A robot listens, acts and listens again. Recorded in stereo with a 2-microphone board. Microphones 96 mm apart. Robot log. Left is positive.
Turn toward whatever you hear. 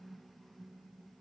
cmd idle
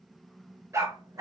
note: The dog barking: about 35° right or 145° right.
cmd yaw -35
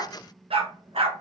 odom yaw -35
note: So it is at 95° right.
cmd yaw -95
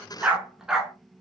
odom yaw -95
end: Found it: a dog barking, straight ahead.